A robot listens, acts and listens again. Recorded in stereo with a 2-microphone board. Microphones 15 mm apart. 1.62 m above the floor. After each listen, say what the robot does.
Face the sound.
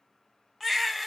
Turn 30° left.
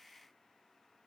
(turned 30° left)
Keep listening.
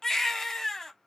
Turn 150° left.
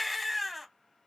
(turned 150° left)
Turn 10° right.
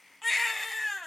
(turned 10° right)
Facing the baby crying.